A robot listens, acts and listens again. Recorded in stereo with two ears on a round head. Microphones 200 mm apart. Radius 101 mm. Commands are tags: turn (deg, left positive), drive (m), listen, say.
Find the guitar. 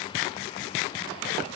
<listen/>
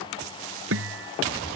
<turn deg="-65"/>
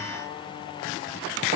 <listen/>
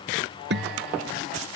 <turn deg="-50"/>
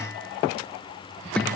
<say>Facing the guitar.</say>